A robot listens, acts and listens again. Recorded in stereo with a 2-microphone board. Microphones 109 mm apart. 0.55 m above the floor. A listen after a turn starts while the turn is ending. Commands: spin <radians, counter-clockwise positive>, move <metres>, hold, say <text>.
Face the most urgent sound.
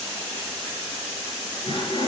hold
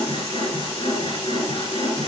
hold
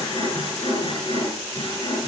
say I can't make out anything urgent to turn to.